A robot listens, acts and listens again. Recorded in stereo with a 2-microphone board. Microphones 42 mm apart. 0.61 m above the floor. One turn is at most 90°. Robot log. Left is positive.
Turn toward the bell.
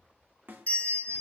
note: The bell: about 40° left or 140° left.
cmd yaw +40
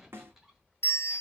note: So it is at 100° left.
cmd yaw +90
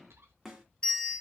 note: The bell is now 20° left.
cmd yaw +20
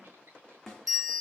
end: Facing the bell.